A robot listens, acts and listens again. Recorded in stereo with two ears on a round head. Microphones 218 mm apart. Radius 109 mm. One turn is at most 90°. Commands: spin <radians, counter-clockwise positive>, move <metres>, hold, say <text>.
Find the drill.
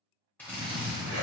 spin 0.52
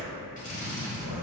spin 1.57
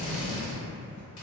spin 0.96
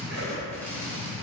say Facing the drill, under 1 m away.